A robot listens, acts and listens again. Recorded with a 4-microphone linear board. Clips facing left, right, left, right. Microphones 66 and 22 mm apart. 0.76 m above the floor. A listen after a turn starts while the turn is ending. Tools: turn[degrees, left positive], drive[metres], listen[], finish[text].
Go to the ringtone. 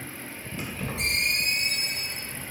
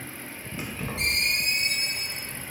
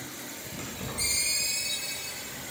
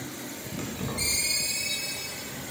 Thought: The ringtone: about 75° right or 105° right.
Action: turn[-75]
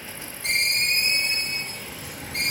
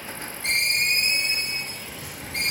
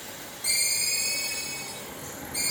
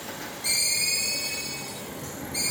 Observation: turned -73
Thought: So it is at 35° right.
Action: turn[-35]
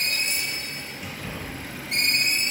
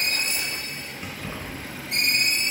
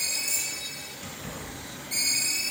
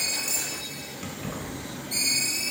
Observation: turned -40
Action: drive[1.0]
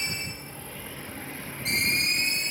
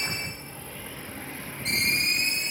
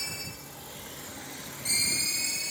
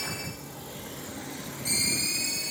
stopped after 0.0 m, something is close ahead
Action: finish[Something is in my way. I am facing the ringtone but have not reached it.]